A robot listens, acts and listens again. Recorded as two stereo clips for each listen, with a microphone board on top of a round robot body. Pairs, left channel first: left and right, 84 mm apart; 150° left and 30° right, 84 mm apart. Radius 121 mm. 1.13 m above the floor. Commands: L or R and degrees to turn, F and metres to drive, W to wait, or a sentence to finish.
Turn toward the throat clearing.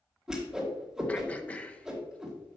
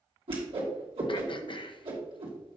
L165
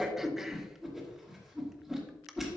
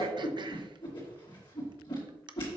Facing the throat clearing, under 1 m away.